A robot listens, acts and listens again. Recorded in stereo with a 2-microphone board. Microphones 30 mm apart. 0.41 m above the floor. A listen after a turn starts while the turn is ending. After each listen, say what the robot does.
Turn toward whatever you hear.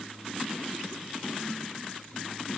Keep listening.
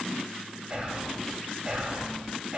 Turn 30° right.
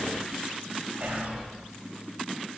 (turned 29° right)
Turn 115° right.
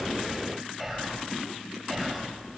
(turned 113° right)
Facing the whispering, 1 to 2 m away.